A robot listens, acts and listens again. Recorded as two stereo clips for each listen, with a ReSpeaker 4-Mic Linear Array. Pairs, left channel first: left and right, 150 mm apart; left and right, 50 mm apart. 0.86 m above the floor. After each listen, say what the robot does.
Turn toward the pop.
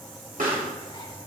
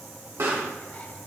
Turn 65° right.
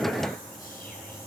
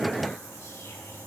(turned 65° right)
Keep listening.
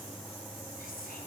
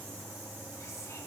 I heard a pop, but can't make it out now. It was about straight ahead or 50° right.